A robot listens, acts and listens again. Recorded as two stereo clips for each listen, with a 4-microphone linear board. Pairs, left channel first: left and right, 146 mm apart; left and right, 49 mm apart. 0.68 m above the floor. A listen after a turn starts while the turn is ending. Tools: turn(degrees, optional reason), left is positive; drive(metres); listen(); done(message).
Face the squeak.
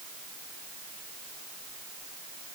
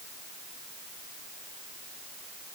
listen()
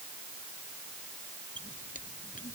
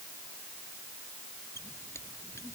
turn(degrees=70, reason="The squeak: about 70° left or 110° left.")
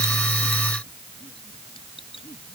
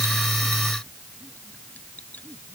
turn(degrees=40, reason="So it is at 40° left.")
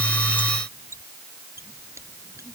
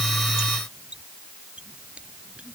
turn(degrees=-20, reason="The squeak is now 20° right.")
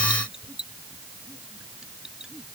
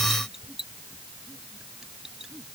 done("Facing the squeak.")